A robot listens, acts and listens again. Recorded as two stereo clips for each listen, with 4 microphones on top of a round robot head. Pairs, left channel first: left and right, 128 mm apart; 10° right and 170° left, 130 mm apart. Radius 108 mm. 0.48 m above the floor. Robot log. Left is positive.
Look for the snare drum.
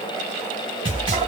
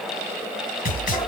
note: The snare drum: 30° right.
cmd yaw -30
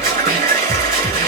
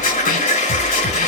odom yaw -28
end: Found it: a snare drum, straight ahead.